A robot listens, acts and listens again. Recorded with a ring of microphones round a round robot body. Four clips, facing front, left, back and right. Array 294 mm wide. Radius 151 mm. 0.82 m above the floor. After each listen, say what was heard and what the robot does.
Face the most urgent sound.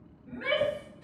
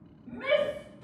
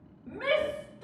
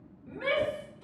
The shout: straight behind. Turn 180° left.
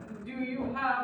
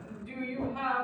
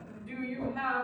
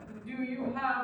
Found it: a shout, straight ahead.